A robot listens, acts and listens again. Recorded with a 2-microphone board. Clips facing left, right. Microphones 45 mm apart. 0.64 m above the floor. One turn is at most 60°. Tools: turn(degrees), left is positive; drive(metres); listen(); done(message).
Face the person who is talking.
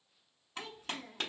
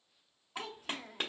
turn(degrees=-60)
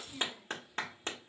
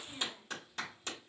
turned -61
turn(degrees=-20)
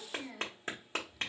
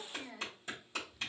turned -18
done("Facing the child speaking.")